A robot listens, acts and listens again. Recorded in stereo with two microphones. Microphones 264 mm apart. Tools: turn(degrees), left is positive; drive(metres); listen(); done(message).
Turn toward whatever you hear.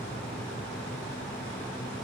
listen()
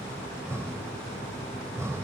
turn(degrees=-30)
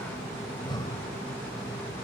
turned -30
turn(degrees=20)
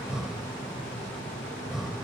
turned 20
done("Facing the breathing.")